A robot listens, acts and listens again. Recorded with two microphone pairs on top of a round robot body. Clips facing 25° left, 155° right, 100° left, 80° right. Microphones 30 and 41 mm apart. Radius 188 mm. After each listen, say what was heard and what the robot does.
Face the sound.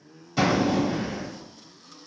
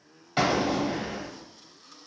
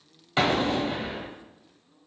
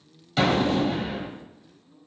The explosion: 150° left. Turn 150° left.
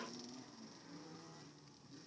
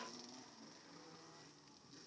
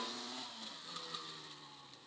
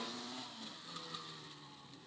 Facing where the explosion came from. I can't hear it now.